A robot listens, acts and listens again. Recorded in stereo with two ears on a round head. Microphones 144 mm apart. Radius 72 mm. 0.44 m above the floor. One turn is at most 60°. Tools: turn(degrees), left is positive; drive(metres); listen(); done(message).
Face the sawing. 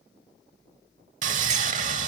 turn(degrees=-50)
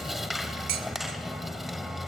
done("Found it: sawing, straight ahead.")